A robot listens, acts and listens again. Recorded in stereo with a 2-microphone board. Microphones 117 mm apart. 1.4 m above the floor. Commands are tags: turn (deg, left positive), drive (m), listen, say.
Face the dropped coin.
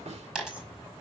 <turn deg="-30"/>
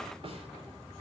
<listen/>
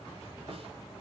<say>I heard a dropped coin, but can't make it out now. It was about 25° left or 145° right.</say>